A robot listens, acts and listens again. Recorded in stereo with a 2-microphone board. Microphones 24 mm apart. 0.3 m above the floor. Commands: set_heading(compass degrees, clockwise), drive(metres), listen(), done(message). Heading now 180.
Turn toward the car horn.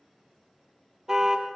set_heading(200)
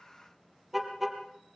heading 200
done("Found it: a car horn, straight ahead.")